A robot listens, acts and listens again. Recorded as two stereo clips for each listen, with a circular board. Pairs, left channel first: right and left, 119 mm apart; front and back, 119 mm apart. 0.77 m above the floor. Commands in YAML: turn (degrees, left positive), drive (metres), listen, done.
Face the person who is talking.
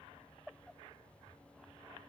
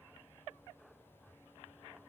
listen: true
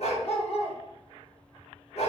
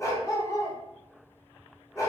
listen: true
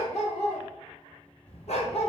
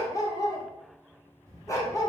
turn: -120
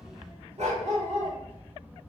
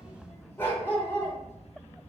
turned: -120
turn: 15
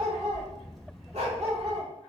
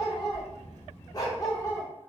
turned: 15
done: "Facing the child speaking, 1 to 2 m away."